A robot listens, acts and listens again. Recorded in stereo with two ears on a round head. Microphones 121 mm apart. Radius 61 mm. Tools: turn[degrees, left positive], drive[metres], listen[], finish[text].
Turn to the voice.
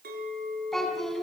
Action: turn[30]
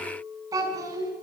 Thought: So it is at 25° right.
Action: turn[-25]
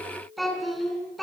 Action: finish[Found it: a child speaking, straight ahead.]